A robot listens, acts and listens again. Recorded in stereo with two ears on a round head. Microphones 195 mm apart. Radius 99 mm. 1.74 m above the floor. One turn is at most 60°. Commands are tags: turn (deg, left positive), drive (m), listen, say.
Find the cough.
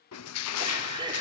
<turn deg="-20"/>
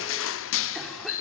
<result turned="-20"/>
<listen/>
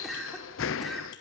<say>Found it: a cough, straight ahead.</say>